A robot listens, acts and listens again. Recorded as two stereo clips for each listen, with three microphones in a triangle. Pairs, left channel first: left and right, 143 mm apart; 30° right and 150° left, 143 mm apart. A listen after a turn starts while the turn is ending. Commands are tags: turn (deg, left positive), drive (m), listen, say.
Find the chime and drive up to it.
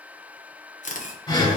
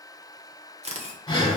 <listen/>
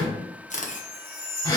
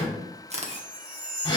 <turn deg="170"/>
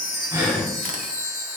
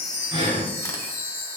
<turn deg="-45"/>
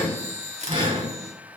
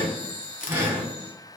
<drive m="1.0"/>
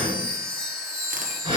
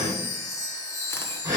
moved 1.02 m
<drive m="1.0"/>
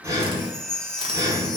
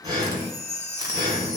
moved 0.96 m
<drive m="1.0"/>
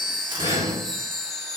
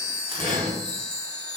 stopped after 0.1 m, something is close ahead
<say>Arrived at the chime, straight ahead.</say>